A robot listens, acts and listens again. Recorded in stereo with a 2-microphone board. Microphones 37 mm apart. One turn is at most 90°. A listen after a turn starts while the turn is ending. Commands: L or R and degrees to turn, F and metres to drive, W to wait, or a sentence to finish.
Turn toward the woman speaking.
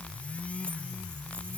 W
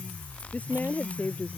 L45
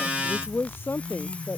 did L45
L90
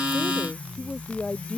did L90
L30
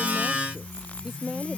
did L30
R10
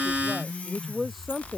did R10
Found it: a woman speaking, straight ahead.